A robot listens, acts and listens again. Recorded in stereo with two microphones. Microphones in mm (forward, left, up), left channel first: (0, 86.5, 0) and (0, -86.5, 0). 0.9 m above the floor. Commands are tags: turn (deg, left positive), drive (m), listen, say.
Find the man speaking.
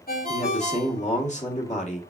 <turn deg="40"/>
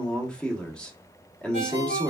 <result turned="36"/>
<say>Found it: a man speaking, straight ahead, 1 to 2 m away.</say>